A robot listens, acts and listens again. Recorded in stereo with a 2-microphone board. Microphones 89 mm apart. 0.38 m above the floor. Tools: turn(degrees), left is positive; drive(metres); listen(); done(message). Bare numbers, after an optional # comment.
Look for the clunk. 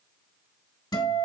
listen()
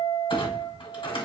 turn(90)
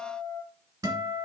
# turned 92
done("Facing where the clunk came from. I can't hear it now.")